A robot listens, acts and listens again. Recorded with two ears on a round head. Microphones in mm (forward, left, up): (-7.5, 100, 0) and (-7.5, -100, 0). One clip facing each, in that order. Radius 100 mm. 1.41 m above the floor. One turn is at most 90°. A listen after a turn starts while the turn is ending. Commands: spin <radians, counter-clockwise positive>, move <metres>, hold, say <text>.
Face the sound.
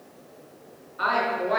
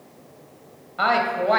spin -1.57
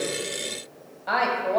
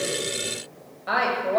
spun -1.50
say Facing the woman speaking, 1 to 2 m away.